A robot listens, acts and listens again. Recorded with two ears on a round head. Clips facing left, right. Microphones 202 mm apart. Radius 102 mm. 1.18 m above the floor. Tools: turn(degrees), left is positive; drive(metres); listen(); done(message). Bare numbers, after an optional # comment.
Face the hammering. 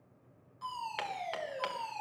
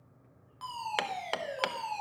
# The hammering: about 65° right or 115° right.
turn(-65)
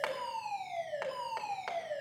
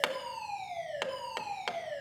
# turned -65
# So it is at 45° right.
turn(-45)
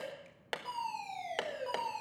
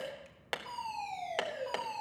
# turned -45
done("Facing the hammering.")